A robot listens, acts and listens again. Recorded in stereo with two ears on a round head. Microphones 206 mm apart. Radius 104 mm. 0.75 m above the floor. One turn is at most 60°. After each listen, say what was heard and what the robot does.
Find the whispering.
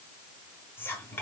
Turn 30° left.
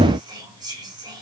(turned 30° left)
So it is at 20° right. Turn 20° right.
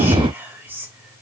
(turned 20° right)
The whispering is now 10° right. Turn 10° right.
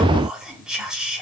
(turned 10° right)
Found it: whispering, straight ahead.